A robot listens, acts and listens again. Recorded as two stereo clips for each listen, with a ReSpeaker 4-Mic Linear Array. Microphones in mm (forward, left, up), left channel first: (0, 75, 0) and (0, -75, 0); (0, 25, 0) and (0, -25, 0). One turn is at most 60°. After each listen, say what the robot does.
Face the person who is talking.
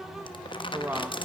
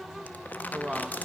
Turn 30° right.
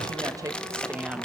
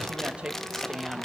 Turn 30° right.
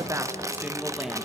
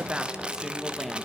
Turn 30° left.
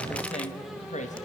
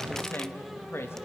Turn 60° left.
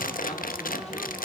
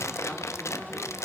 Turn 60° left.
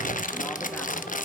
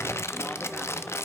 Keep listening.
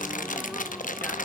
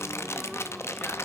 Facing where the woman speaking came from. I can't hear it now.